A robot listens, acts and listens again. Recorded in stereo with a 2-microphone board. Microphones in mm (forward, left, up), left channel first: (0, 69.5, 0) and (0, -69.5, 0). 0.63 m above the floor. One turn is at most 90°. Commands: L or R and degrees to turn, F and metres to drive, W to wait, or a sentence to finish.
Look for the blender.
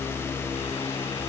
W
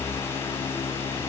W
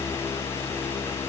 I can't make out a blender to turn to.